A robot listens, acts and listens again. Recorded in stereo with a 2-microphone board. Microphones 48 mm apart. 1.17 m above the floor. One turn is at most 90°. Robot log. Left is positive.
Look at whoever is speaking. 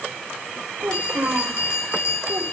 note: The child speaking: about 50° right or 130° right.
cmd yaw -50
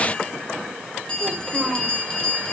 end: Found it: a child speaking, straight ahead, 2 to 4 m away.